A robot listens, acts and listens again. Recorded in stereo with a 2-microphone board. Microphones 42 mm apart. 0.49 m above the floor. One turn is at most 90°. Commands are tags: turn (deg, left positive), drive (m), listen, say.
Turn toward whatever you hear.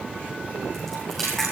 <turn deg="30"/>
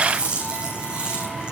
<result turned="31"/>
<turn deg="-25"/>
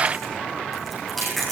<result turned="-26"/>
<say>Found it: chewing, straight ahead, over 4 m away.</say>